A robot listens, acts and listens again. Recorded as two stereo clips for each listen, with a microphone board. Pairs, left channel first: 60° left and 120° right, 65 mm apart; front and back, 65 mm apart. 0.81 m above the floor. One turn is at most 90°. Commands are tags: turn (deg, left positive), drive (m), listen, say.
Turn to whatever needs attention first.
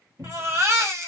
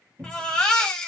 <turn deg="-80"/>
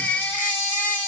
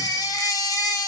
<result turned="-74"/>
<say>Found it: a baby crying, straight ahead, 1 to 2 m away.</say>